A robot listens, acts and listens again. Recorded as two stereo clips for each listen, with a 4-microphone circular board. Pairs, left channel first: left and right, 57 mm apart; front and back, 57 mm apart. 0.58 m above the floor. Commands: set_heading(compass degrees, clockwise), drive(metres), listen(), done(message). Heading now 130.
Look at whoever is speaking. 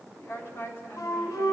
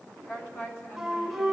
set_heading(85)
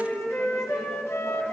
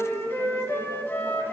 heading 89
listen()
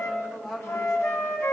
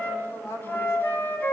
done("Facing the woman speaking.")